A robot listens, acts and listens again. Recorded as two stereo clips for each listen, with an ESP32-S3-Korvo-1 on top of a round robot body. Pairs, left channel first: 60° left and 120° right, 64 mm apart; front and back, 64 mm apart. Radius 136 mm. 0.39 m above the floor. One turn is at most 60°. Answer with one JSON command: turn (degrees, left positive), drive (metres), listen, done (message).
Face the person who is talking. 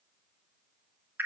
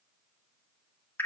{"listen": true}
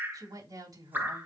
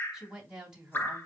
{"turn": -60}
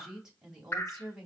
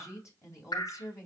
{"turn": -40}
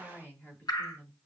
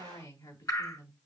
{"done": "Facing the woman speaking, 2 to 4 m away."}